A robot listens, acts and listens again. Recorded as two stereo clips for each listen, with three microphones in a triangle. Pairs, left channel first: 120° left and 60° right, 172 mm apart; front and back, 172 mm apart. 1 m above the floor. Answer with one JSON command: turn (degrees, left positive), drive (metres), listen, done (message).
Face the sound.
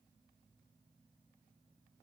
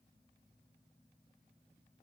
{"listen": true}
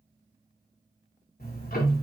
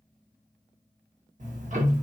{"turn": 145}
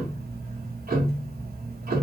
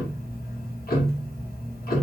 {"turn": -30}
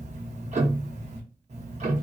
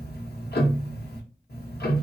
{"turn": -10}
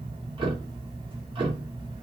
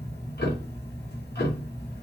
{"done": "Found it: ticking, straight ahead, under 1 m away."}